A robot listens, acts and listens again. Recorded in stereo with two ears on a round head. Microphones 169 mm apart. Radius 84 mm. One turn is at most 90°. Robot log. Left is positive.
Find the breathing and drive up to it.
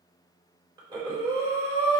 note: The breathing: about 25° right or 155° right.
cmd yaw -25
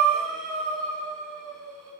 cmd fwd 1.0
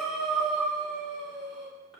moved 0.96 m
cmd fwd 1.0
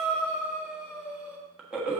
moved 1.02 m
cmd fwd 1.0
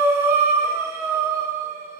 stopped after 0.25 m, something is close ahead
note: The breathing is now 15° right.
cmd yaw -15
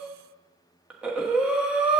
end: I am next to the breathing.